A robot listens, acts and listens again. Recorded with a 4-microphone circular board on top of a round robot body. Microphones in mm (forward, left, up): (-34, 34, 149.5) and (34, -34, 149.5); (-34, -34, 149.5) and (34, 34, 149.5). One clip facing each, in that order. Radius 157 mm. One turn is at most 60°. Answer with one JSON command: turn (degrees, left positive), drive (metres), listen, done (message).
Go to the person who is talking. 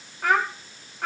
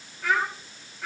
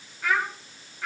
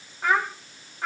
{"turn": 60}
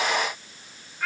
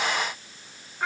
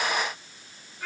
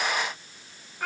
{"turn": 15}
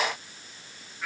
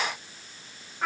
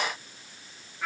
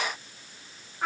{"drive": 1.0}
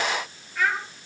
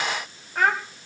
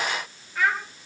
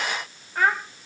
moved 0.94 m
{"drive": 1.0}
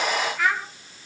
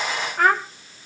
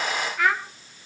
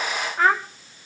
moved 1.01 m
{"drive": 1.0}
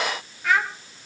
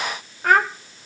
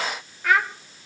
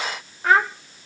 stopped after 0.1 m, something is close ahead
{"turn": -10}
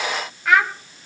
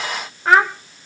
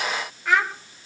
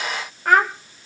{"turn": 10}
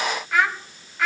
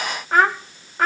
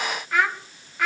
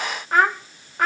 {"done": "I am next to the child speaking."}